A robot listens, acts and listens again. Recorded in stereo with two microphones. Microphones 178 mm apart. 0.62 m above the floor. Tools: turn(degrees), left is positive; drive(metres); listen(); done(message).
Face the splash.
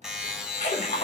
turn(degrees=55)
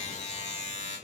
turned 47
listen()
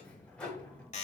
done("I heard a splash, but can't make it out now. It was about 5° left or 80° left.")